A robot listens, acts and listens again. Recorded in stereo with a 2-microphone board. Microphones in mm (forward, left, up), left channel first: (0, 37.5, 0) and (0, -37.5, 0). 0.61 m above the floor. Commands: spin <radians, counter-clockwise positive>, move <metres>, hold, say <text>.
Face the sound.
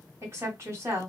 spin -0.70
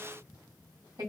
spin -1.57
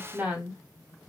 spin -0.44
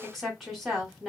say Found it: a woman speaking, straight ahead, 1 to 2 m away.